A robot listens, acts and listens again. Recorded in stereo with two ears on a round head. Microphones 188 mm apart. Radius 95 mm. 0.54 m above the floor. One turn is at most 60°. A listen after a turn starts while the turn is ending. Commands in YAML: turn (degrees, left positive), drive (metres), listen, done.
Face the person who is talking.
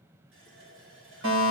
listen: true
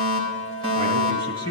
turn: -35
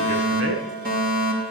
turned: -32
listen: true
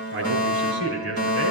turn: -60
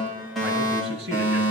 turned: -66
turn: -50
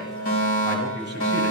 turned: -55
done: "Found it: a man speaking, straight ahead, over 4 m away."